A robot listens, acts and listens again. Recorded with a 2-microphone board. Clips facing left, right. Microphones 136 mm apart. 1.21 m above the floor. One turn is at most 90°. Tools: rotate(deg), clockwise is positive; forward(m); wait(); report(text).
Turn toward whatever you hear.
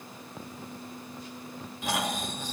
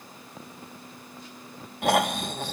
rotate(65)
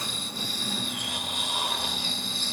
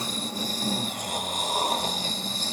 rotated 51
rotate(45)
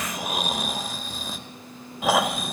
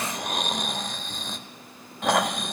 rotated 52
report("Found it: snoring, straight ahead, 1 to 2 m away.")